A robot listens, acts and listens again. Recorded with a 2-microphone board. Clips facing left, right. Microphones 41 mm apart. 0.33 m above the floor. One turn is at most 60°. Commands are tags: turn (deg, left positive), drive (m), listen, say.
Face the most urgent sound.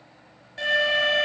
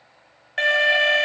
<turn deg="-60"/>
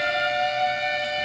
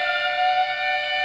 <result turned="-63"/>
<turn deg="-25"/>
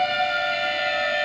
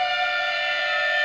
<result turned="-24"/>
<say>Facing the alarm.</say>